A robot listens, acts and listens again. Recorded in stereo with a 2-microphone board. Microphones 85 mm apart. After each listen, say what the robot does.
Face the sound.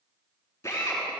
Turn 35° left.
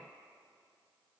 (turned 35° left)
Keep listening.
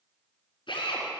Turn 110° left.
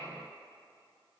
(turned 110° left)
Keep listening.
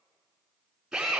Turn 10° right.
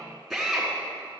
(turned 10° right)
Found it: a drill, straight ahead.